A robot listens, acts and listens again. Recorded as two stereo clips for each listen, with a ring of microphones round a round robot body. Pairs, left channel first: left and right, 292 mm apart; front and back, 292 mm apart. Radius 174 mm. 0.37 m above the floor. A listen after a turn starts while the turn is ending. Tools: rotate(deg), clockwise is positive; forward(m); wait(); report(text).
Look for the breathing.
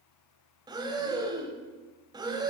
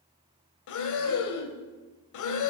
rotate(15)
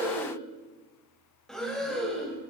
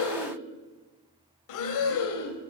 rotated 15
report("Facing the breathing.")